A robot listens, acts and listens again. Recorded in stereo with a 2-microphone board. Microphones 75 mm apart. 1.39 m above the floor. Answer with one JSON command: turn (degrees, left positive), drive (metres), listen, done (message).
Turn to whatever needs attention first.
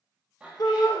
{"turn": 65}
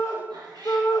{"turn": 50}
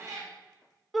{"done": "Facing the shout."}